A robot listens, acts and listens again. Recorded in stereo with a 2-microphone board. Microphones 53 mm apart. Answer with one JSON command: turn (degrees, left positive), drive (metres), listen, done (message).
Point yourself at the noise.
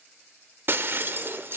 {"turn": -45}
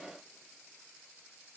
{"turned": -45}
{"listen": true}
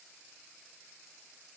{"done": "I heard breaking glass, but can't make it out now. It was about straight ahead or 90° right."}